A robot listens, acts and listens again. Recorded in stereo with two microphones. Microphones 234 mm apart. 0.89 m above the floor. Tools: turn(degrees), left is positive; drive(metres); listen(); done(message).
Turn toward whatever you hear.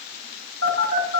turn(degrees=-70)
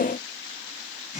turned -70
done("Found it: a phone buzzing, straight ahead, over 4 m away.")